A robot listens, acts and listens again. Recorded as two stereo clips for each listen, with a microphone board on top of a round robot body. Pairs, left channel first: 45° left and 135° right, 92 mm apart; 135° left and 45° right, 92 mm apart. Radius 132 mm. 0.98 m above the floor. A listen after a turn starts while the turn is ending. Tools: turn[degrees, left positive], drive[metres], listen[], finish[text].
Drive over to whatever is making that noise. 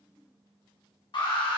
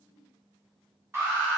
Thought: The alarm: 20° left.
Action: turn[20]
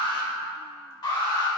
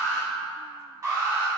Action: drive[1.0]
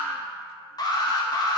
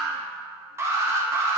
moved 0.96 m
Thought: The alarm is now 10° left.
Action: turn[10]
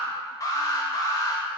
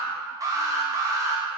Action: drive[1.0]
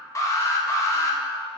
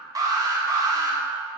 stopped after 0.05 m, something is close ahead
Action: finish[I am next to the alarm.]